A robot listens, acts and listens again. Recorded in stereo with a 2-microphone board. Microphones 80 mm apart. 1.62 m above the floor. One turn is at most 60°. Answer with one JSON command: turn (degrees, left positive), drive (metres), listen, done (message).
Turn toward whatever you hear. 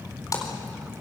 {"turn": 45}
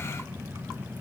{"listen": true}
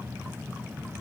{"done": "I heard a splash, but can't make it out now. It was about straight ahead or 90° left."}